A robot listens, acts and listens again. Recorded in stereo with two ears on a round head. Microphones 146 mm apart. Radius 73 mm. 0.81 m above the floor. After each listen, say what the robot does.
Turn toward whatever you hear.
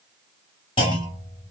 Turn 30° left.
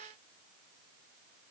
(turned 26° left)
Keep listening.
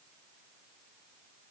I heard a clunk, but can't make it out now. It was about 5° left or 125° left.